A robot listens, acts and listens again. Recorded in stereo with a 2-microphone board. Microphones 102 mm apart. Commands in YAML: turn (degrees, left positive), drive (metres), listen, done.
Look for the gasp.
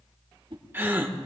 turn: -20
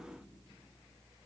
listen: true
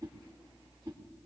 done: "I heard a gasp, but can't make it out now. It was about straight ahead or 140° right."